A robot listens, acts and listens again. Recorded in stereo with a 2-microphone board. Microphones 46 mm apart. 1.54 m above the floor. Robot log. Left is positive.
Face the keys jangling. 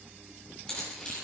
note: The keys jangling: about 15° left or 165° left.
cmd yaw +15
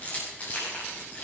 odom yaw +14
note: The keys jangling: about 35° left or 145° left.
cmd yaw +35
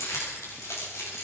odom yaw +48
note: So it is at 95° left.
cmd yaw +95
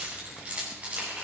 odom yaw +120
note: The keys jangling is now 30° right.
cmd yaw -30
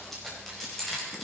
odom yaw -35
end: Found it: keys jangling, straight ahead.